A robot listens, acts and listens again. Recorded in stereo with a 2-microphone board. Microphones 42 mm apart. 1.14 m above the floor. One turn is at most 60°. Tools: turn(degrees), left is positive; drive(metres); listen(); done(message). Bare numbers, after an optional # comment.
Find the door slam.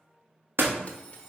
# The door slam: about 75° right or 105° right.
turn(-60)
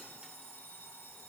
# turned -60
listen()
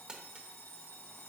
done("I heard a door slam, but can't make it out now. It was about 15° right or 45° right.")